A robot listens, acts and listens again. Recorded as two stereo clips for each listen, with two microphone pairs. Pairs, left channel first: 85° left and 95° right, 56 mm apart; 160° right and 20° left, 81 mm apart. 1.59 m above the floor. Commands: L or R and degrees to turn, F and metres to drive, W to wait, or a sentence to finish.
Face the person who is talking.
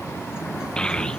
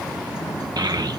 L15
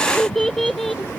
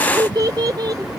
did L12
Found it: a child speaking, straight ahead.